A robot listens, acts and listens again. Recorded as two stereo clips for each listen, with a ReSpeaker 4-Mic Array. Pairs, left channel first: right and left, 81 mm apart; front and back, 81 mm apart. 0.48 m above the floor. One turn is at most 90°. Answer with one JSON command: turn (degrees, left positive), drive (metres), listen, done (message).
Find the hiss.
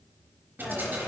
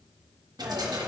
{"turn": 90}
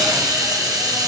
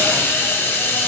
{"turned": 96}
{"turn": 60}
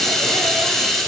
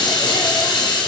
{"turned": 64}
{"done": "Facing the hiss."}